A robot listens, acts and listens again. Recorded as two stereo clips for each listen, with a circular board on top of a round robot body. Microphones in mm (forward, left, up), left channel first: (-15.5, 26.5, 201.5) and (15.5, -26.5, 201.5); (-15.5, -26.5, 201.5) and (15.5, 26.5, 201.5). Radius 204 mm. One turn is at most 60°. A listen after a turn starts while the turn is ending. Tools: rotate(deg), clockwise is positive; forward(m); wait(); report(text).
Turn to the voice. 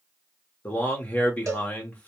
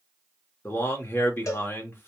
rotate(60)
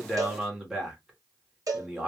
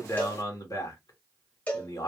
rotate(60)
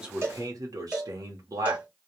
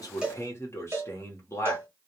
rotate(60)
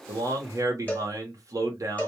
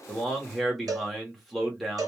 rotate(30)
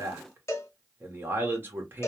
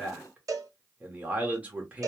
rotate(10)
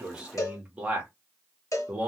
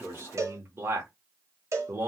rotate(-10)
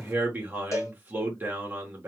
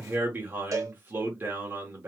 report("Found it: a man speaking, straight ahead.")